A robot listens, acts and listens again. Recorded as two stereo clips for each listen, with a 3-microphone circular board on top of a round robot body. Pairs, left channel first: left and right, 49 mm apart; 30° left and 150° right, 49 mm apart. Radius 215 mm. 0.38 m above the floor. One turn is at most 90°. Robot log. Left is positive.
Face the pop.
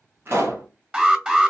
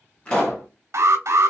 note: The pop: 40° right.
cmd yaw -40
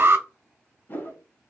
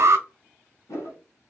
end: I heard a pop from this way, but can't make it out now.